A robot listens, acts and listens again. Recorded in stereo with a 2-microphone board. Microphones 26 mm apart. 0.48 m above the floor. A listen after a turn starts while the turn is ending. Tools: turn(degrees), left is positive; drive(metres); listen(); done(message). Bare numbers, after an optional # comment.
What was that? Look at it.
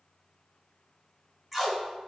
turn(-30)
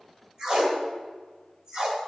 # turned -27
# So it is at 150° right.
turn(-150)
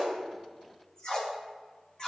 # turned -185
# The tape being pulled is now 35° left.
turn(35)
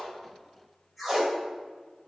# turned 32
done("Found it: tape being pulled, straight ahead.")